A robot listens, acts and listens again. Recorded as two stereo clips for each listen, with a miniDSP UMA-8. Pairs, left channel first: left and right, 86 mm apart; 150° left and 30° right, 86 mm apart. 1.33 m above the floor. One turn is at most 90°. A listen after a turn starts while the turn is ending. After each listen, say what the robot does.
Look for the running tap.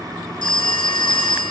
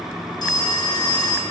Keep listening.
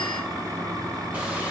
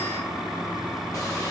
Keep listening.
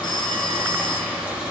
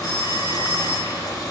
I can't make out a running tap, only a phone ringing.